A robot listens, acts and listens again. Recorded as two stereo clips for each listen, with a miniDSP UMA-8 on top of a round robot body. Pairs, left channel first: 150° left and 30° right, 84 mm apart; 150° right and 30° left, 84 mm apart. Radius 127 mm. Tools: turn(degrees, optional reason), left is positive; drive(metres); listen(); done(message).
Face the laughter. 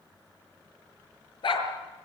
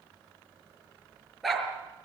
listen()
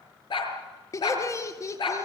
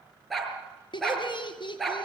turn(degrees=-160, reason="The laughter: 160° right.")
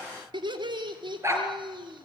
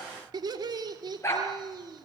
done("Found it: laughter, straight ahead.")